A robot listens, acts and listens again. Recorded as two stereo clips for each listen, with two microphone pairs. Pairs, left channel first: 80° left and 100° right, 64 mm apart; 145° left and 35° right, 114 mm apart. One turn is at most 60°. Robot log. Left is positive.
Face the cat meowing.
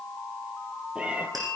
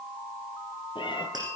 note: The cat meowing: 170° right.
cmd yaw -60
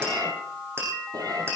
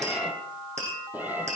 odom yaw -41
note: The cat meowing is now 110° right.
cmd yaw -60
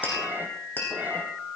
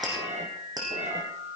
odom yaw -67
note: The cat meowing is now 35° right.
cmd yaw -35
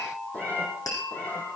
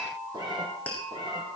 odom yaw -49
note: The cat meowing is now 15° left.
cmd yaw +15
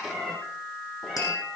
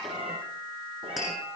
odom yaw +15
end: Found it: a cat meowing, straight ahead.